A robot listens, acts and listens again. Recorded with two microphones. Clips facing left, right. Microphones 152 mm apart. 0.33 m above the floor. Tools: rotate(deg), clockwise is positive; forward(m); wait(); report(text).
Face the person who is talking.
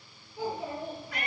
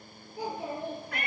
rotate(35)
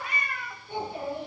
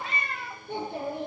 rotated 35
rotate(110)
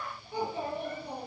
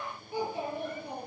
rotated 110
rotate(10)
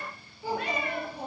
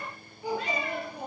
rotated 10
report("Facing the child speaking.")